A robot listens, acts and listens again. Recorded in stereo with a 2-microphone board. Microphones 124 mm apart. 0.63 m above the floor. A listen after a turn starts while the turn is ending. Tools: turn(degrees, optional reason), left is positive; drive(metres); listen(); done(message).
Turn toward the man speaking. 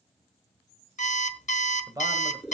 turn(degrees=-30, reason="The man speaking: about 30° right or 150° right.")
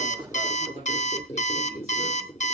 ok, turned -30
listen()
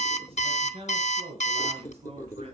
turn(degrees=-125, reason="So it is at 125° right.")
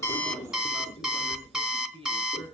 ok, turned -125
turn(degrees=-50, reason="The man speaking is now 50° right.")
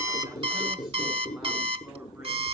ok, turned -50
turn(degrees=-10, reason="The man speaking is now 10° right.")
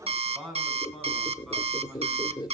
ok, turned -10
done("Found it: a man speaking, straight ahead.")